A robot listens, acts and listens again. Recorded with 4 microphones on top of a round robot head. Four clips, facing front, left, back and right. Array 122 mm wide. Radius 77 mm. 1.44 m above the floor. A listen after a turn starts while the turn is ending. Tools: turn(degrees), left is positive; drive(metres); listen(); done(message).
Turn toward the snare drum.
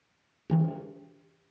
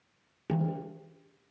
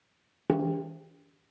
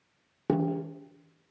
turn(degrees=-145)
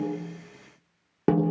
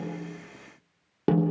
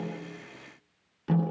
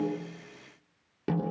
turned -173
turn(degrees=30)
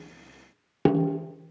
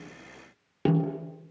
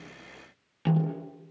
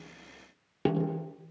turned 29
done("Found it: a snare drum, straight ahead.")